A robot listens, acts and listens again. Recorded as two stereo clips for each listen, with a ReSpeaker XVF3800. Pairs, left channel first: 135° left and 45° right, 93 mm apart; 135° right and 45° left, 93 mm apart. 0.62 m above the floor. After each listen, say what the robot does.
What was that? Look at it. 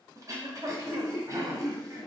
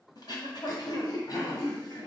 Turn 95° right.
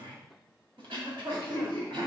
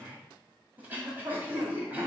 Turn 25° right.
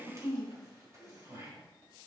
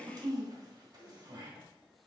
Turn 10° left.
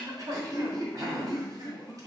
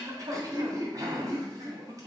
Facing the throat clearing, 1 to 2 m away.